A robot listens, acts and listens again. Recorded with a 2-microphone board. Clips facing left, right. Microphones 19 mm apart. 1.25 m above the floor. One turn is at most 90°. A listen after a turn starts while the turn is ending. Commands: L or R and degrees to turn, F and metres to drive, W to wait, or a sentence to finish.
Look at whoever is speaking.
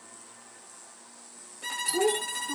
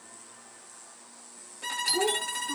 L30
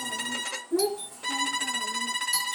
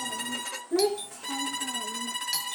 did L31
R50
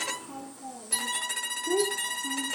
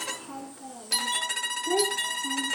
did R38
R55
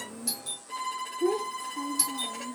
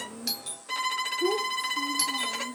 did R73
L15
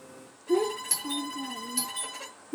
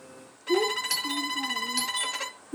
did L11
Facing the child speaking, 1 to 2 m away.